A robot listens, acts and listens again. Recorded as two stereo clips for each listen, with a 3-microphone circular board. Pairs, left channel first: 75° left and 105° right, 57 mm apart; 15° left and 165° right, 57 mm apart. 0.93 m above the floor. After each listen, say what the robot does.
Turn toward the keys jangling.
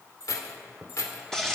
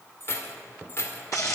Turn 55° left.
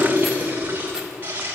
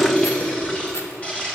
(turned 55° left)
Keep listening.
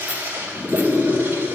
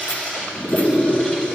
Keep listening.
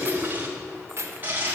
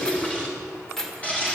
Turn 70° right.
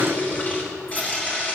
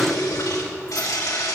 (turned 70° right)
Keep listening.
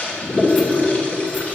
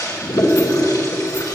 Keep listening.
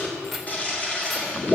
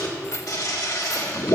Turn 15° right.
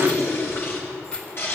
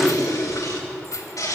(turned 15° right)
Found it: keys jangling, straight ahead, 2 to 4 m away.